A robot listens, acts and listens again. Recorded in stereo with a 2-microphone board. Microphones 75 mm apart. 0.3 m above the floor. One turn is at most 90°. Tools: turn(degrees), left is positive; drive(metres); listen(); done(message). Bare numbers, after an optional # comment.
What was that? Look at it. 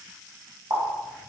# The running tap: about 55° right or 125° right.
turn(-55)
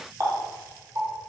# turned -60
# So it is at 50° right.
turn(-50)
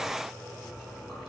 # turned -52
listen()
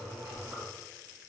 listen()
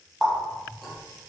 done("Found it: a running tap, straight ahead.")